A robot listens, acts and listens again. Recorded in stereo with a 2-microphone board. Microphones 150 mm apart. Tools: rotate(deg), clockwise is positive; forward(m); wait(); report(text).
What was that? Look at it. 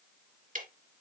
rotate(60)
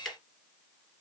report("Facing the ticking, 2 to 4 m away.")